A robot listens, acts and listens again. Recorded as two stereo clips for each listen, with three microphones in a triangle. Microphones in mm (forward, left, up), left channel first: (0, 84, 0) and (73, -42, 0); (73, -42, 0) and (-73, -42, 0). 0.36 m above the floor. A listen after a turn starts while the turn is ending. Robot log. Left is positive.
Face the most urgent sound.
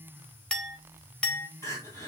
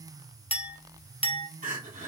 note: The crying: 170° right.
cmd yaw -170
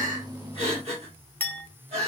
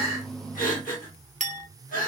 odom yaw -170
note: The crying is now 15° right.
cmd yaw -15
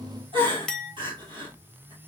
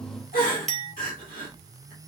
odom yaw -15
end: Found it: crying, straight ahead, 2 to 4 m away.